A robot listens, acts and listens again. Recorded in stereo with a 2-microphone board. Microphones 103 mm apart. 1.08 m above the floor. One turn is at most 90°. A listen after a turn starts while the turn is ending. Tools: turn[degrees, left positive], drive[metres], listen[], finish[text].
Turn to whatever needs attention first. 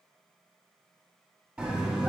Action: turn[-30]
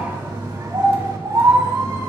Thought: So it is at 135° right.
Action: turn[-90]
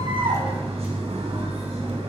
Thought: The scream is now 75° right.
Action: turn[-75]
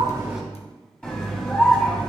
Thought: The scream is now 10° left.
Action: turn[10]
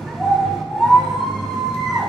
Action: finish[Facing the scream, 2 to 4 m away.]